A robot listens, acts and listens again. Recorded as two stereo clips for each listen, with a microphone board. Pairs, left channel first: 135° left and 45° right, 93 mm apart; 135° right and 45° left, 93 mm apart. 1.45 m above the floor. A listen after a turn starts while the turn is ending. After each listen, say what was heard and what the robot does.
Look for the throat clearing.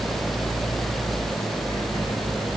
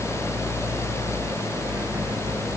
Keep listening.
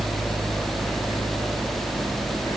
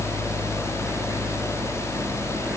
Keep listening.
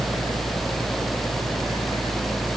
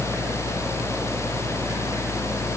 I can't make out throat clearing to turn to.